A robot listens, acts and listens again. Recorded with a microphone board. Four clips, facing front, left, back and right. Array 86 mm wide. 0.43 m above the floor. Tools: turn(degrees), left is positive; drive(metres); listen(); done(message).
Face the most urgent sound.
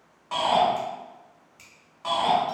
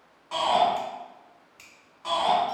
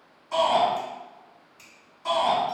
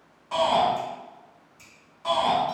done("Found it: a shout, straight ahead.")